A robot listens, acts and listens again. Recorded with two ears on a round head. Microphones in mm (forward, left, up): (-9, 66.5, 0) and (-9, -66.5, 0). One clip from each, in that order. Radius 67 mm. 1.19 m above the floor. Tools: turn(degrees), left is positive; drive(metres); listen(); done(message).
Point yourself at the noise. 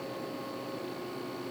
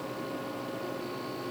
listen()
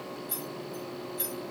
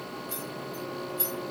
turn(degrees=30)
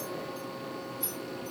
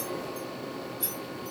turn(degrees=-25)
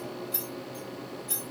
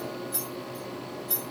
turn(degrees=10)
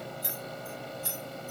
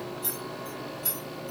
done("Facing the keys jangling, 2 to 4 m away.")